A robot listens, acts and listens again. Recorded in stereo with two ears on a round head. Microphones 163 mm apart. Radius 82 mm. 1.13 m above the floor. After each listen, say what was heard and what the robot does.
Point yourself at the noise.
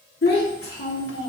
The child speaking: about 65° left or 115° left. Turn 65° left.
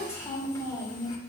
So it is at 20° left. Turn 20° left.
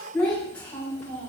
The child speaking is now 10° left. Turn 10° left.
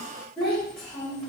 Facing the child speaking.